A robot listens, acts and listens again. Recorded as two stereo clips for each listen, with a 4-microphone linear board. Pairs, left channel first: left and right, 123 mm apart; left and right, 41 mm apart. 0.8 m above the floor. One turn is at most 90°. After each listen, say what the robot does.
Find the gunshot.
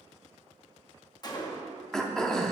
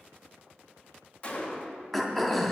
Turn 35° left.
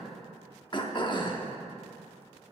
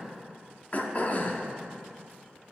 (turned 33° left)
Keep listening.
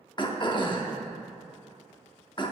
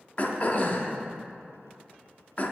I heard a gunshot, but can't make it out now. It was about straight ahead or 115° left.